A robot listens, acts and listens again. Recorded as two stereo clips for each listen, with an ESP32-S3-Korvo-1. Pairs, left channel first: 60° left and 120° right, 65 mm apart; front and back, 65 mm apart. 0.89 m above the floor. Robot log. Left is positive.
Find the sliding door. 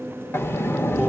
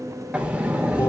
note: The sliding door: 110° left.
cmd yaw +110
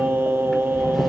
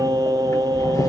note: The sliding door is now 30° right.
cmd yaw -30
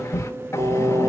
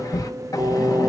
note: The sliding door is now 20° left.
cmd yaw +20
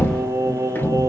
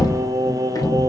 end: Found it: a sliding door, straight ahead, under 1 m away.